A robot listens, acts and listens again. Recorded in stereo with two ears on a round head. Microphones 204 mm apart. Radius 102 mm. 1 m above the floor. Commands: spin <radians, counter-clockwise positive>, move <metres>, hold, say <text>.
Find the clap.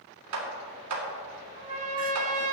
spin -1.57
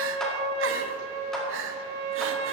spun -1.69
hold
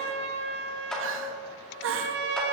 say Found it: a clap, straight ahead.